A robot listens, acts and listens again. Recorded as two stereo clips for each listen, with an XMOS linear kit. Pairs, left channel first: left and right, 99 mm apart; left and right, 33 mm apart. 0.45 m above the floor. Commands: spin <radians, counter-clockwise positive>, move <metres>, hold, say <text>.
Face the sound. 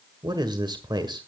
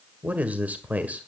spin -0.87
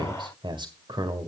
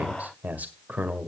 spin -1.22
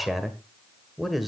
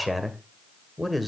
say Found it: a man speaking, straight ahead, 1 to 2 m away.